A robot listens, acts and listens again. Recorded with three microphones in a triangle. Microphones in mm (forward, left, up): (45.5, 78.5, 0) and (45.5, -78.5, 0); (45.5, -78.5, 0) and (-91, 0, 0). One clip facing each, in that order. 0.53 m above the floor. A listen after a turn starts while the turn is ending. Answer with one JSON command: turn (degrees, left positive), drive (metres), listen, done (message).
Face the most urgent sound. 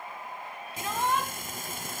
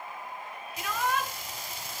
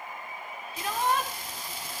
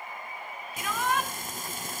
{"turn": 30}
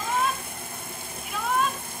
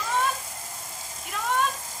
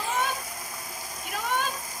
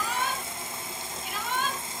{"done": "Found it: a shout, straight ahead, over 4 m away."}